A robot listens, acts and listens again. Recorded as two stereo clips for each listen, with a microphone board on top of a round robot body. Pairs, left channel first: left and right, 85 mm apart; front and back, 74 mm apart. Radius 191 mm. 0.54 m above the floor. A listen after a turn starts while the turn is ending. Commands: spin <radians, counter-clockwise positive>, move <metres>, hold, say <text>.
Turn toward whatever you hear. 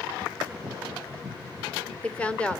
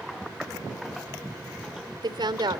spin 2.88
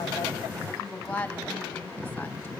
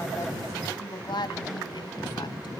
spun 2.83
spin 0.26
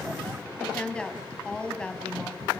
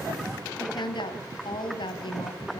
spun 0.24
spin 0.17
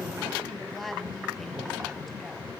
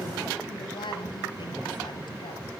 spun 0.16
say Found it: a woman speaking, straight ahead, over 4 m away.